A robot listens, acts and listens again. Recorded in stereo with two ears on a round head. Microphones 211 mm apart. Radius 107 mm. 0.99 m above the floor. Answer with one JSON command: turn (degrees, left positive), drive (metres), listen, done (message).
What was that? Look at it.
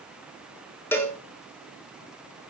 {"turn": 30}
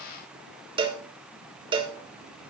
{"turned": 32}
{"turn": -20}
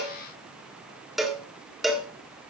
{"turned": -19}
{"done": "Facing the cowbell, 1 to 2 m away."}